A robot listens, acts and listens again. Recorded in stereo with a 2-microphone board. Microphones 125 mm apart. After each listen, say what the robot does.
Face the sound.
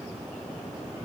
Keep listening.
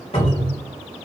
Turn 50° left.
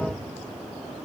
Keep listening.
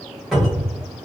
Found it: a cupboard door, straight ahead, 1 to 2 m away.